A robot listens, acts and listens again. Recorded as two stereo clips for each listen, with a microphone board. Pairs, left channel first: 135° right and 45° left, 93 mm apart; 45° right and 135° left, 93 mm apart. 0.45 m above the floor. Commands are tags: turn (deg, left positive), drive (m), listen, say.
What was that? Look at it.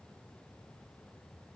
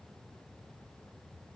<listen/>
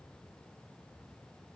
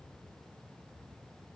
<listen/>
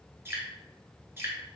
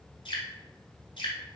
<turn deg="-20"/>
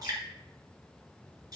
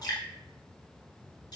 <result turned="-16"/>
<say>Facing the dripping.</say>